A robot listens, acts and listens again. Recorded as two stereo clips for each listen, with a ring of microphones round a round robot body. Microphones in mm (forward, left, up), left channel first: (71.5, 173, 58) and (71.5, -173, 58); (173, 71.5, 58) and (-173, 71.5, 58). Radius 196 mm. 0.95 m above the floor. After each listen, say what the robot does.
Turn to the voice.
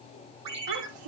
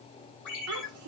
Turn 125° right.
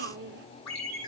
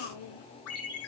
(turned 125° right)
Turn 30° right.
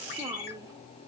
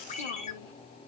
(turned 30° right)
Keep listening.
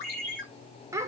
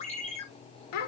Turn 10° right.
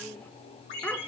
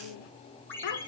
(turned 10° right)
Found it: a child speaking, straight ahead.